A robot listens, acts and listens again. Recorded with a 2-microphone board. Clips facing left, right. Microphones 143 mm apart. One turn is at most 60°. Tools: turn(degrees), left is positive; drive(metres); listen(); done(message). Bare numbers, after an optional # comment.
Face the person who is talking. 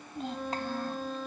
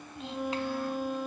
# The child speaking: about 45° left or 135° left.
turn(45)
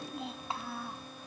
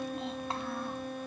done("Facing the child speaking.")